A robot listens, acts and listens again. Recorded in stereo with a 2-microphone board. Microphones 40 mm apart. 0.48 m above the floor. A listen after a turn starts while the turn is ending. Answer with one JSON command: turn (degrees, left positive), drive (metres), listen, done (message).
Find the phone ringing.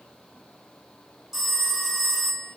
{"turn": -30}
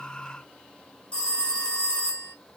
{"turn": 25}
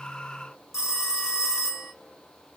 {"turn": -10}
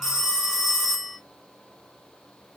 {"done": "Facing the phone ringing, 2 to 4 m away."}